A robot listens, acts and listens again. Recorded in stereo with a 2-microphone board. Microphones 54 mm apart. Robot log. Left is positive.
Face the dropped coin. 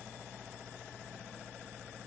cmd idle
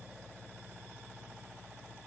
cmd idle
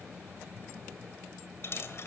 note: The dropped coin: about 50° left or 130° left.
cmd yaw +50
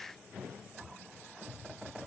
cmd idle
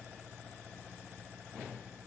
end: I heard a dropped coin, but can't make it out now. It was about straight ahead or 80° left.